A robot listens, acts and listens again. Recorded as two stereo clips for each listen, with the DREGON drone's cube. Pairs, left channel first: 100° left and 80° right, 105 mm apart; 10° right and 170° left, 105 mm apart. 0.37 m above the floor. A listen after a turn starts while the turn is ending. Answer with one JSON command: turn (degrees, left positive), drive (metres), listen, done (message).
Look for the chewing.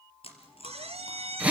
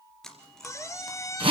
{"turn": 75}
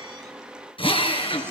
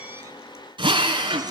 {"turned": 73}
{"listen": true}
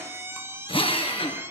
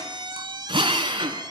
{"listen": true}
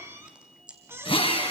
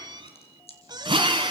{"done": "Found it: chewing, straight ahead."}